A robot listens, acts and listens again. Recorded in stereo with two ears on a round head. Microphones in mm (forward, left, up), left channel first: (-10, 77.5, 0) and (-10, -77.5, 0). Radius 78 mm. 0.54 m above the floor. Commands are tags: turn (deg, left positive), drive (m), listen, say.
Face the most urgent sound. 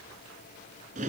<listen/>
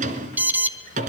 <turn deg="-30"/>
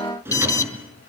<turn deg="20"/>
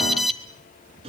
<say>Facing the alarm, 1 to 2 m away.</say>